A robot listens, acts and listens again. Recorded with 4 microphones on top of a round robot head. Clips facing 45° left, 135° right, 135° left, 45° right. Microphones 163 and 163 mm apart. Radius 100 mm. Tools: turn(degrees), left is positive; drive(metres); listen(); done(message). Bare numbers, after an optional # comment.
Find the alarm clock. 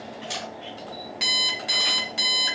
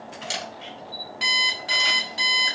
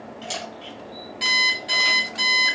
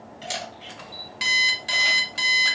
done("Facing the alarm clock, 1 to 2 m away.")